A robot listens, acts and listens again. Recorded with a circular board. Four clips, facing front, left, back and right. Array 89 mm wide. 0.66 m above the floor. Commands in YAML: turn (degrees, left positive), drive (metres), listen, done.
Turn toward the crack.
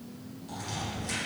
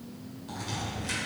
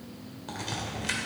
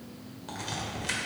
turn: -150
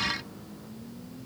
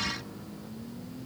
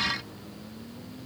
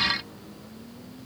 done: "I heard a crack from this way, but can't make it out now."